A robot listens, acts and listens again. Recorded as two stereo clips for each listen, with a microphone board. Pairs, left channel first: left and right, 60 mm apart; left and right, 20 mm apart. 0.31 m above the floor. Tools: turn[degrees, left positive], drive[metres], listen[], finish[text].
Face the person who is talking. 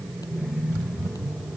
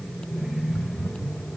Action: listen[]
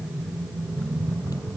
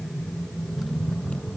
Action: listen[]
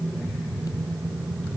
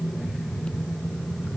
Action: finish[I can't make out anyone speaking.]